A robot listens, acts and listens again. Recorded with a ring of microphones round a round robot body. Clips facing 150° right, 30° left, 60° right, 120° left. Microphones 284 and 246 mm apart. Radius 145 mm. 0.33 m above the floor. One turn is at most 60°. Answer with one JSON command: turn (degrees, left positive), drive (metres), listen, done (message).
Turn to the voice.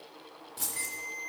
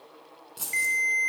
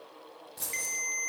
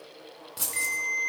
{"listen": true}
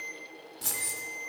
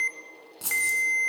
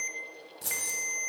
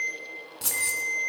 {"listen": true}
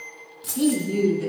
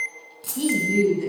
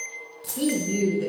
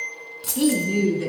{"turn": 60}
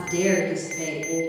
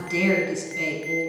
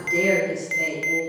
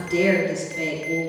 {"turn": 30}
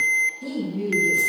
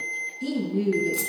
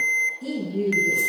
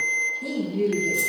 {"turn": -10}
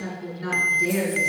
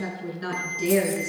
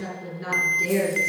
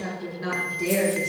{"done": "Found it: a woman speaking, straight ahead."}